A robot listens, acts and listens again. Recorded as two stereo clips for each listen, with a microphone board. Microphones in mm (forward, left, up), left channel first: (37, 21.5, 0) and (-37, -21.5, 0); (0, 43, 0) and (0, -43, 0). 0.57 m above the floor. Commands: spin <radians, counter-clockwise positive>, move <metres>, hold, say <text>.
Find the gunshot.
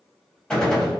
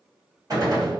spin -0.87
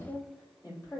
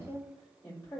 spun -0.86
say Facing where the gunshot came from. I can't hear it now.